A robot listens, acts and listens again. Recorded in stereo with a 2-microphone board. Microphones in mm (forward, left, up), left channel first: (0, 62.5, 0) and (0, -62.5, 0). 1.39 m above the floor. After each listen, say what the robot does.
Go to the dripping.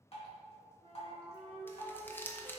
Turn 50° left.
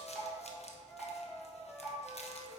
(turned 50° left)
Drive 1.0 m forward.
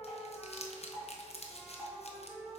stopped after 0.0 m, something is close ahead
Blocked. The dripping is further on, straight ahead.